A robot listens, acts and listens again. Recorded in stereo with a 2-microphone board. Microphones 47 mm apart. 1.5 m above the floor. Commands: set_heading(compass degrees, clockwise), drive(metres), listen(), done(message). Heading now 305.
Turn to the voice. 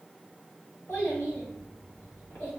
set_heading(255)
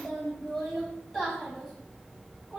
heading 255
done("Facing the child speaking, 1 to 2 m away.")